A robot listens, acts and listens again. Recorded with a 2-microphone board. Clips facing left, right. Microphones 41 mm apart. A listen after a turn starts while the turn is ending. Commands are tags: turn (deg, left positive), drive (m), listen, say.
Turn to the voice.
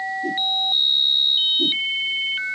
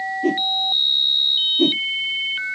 <listen/>
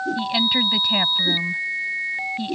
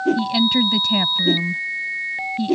<turn deg="20"/>
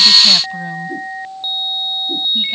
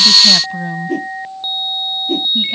<listen/>
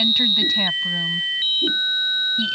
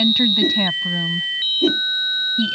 <say>Facing the woman speaking.</say>